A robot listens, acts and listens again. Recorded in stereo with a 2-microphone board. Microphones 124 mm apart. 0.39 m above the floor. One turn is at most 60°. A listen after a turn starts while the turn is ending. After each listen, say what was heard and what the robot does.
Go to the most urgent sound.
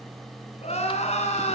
The crying: about 60° left or 120° left. Turn 60° left.
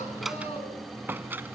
Keep listening.
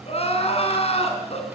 So it is at 55° left. Turn 55° left.
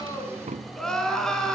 Drive 1.0 m forward.
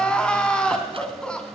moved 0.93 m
Drive 1.0 m forward.
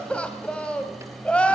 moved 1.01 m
The crying is now 10° left. Turn 10° left.
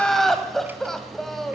Drive 1.0 m forward.
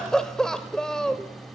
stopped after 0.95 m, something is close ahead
Arrived at the crying, straight ahead.